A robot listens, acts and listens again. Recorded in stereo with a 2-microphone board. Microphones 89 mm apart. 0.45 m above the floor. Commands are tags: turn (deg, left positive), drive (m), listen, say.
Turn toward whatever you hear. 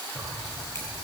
<turn deg="35"/>
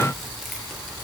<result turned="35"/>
<say>Facing the keys jangling.</say>